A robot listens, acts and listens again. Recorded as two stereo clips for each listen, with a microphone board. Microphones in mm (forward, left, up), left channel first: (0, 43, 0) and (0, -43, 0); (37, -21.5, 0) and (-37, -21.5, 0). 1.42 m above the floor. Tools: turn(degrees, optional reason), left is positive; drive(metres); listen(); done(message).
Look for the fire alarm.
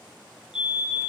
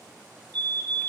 turn(degrees=-170, reason="The fire alarm: 170° right.")
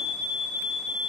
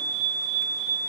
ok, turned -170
turn(degrees=-20, reason="The fire alarm is now 20° right.")
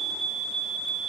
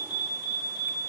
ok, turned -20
done("Found it: a fire alarm, straight ahead.")